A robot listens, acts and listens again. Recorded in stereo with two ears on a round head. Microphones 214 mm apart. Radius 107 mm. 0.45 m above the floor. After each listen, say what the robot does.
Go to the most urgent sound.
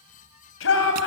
Turn 55° left.
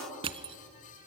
Keep listening.
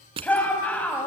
Drive 1.0 m forward.
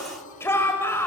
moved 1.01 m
Turn 10° left.
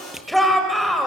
Drive 1.0 m forward.
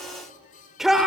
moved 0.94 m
Drive 1.0 m forward.
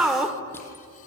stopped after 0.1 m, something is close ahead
Turn 10° right.
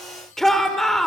Arrived at the shout, straight ahead.